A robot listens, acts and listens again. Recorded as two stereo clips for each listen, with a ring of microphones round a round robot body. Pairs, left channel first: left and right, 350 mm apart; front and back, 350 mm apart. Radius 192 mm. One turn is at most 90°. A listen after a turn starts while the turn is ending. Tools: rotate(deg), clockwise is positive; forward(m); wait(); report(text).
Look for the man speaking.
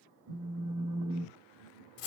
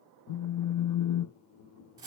wait()
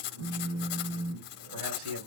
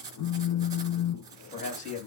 rotate(70)
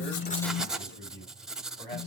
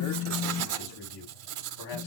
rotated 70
rotate(-15)
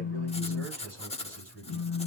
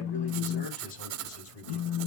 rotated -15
report("Found it: a man speaking, straight ahead.")